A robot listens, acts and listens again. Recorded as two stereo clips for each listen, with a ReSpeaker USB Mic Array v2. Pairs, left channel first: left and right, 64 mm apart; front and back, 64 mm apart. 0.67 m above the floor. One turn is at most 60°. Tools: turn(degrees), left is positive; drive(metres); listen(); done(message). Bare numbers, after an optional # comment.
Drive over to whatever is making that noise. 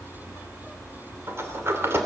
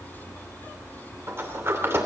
# The sliding door: 135° right.
turn(-60)
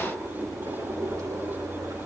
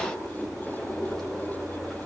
# The sliding door is now 85° right.
turn(-60)
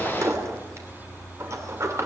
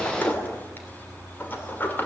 # The sliding door is now 55° right.
turn(-55)
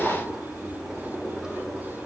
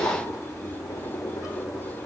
# The sliding door is now 10° right.
turn(-10)
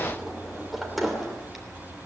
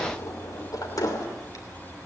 drive(1.0)
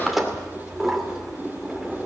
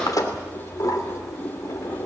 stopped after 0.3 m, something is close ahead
done("Something is in my way. I am facing the sliding door but have not reached it.")